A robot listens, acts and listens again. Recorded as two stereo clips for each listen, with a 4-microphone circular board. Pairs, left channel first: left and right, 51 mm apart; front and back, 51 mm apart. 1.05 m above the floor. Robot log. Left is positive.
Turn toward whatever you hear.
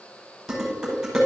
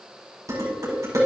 note: The dishes clattering: straight behind.
cmd yaw +180
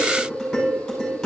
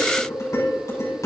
end: Facing the dishes clattering.